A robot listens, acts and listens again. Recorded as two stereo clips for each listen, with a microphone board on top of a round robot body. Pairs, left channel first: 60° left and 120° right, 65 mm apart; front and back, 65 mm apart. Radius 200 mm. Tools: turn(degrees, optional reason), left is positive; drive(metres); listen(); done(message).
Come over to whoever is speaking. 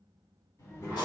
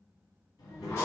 turn(degrees=20, reason="The child speaking: 20° left.")
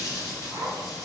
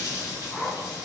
listen()
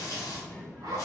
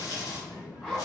drive(metres=1.0)
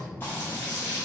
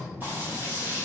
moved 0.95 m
drive(metres=1.0)
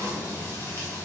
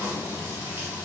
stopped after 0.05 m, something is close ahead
listen()
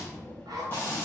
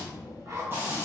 turn(degrees=-10, reason="The child speaking is now 10° right.")
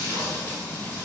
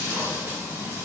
listen()
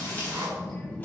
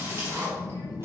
done("I am next to the child speaking.")